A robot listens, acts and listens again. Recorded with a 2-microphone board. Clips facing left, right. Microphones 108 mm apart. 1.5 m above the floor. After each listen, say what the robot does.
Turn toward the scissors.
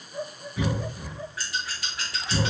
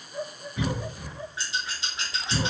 Turn 20° right.
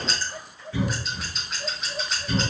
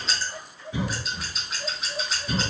Facing the scissors, under 1 m away.